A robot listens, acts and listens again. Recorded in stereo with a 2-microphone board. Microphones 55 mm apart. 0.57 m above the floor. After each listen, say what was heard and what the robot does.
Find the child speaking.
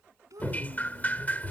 Turn 90° right.
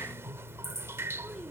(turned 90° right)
Keep listening.
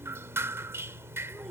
Keep listening.
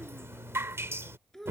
The child speaking is now 10° left. Turn 10° left.
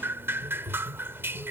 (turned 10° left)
Keep listening.
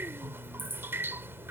Keep listening.
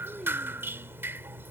Facing where the child speaking came from. I can't hear it now.